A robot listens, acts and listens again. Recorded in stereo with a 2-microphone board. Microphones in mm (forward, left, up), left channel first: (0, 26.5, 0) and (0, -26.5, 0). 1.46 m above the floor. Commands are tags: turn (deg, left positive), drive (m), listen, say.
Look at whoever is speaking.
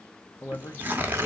<turn deg="50"/>
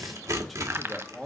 <say>Facing the man speaking.</say>